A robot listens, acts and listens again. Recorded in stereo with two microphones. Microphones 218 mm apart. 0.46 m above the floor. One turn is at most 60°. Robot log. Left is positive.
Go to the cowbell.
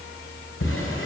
cmd idle
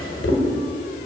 cmd idle
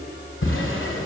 end: I can't make out a cowbell to turn to.